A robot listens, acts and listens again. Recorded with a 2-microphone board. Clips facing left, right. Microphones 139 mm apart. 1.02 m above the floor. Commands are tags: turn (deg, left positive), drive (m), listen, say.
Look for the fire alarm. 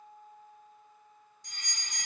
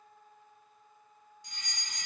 <turn deg="45"/>
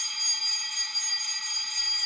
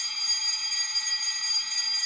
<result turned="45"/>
<say>Found it: a fire alarm, straight ahead.</say>